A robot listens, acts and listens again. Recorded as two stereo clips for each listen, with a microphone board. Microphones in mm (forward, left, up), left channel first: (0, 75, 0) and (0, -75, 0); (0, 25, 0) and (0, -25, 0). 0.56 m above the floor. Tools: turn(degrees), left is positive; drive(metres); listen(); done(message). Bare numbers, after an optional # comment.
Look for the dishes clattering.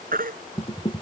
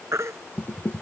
# The dishes clattering: about 35° left or 145° left.
turn(35)
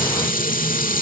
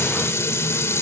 # So it is at 105° left.
turn(105)
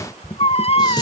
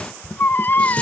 # The dishes clattering is now 30° left.
turn(30)
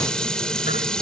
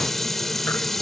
done("Found it: dishes clattering, straight ahead.")